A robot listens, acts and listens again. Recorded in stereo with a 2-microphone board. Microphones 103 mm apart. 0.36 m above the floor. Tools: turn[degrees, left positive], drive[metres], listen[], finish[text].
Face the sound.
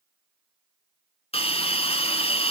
Thought: The hiss: about 70° left or 110° left.
Action: turn[70]
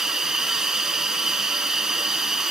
Action: finish[Facing the hiss, 1 to 2 m away.]